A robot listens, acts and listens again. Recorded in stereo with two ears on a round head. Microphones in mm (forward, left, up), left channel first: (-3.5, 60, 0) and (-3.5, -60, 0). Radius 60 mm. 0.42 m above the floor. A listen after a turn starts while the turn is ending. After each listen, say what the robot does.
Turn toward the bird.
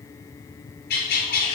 Turn 90° left.
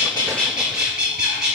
Found it: a bird, straight ahead.